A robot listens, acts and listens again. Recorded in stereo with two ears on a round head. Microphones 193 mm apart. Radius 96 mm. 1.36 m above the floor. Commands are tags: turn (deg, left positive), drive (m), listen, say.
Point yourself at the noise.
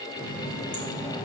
<turn deg="70"/>
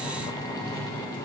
<turn deg="10"/>
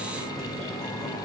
<say>Facing the running tap.</say>